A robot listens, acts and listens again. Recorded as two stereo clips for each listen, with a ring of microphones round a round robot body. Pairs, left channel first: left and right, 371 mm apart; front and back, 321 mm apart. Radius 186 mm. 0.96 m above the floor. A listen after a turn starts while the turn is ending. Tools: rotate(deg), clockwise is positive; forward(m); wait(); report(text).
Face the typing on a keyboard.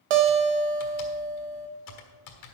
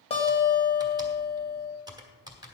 rotate(-100)
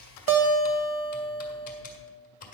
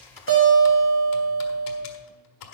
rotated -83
rotate(-20)
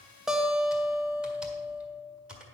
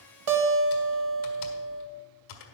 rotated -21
report("Facing the typing on a keyboard.")